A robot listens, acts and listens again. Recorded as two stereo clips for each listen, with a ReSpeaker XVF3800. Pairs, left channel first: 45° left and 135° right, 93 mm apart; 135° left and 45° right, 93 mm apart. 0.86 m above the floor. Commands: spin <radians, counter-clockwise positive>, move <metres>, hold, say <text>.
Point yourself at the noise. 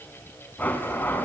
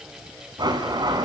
spin -0.35
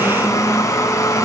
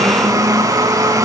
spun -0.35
say Found it: a blender, straight ahead.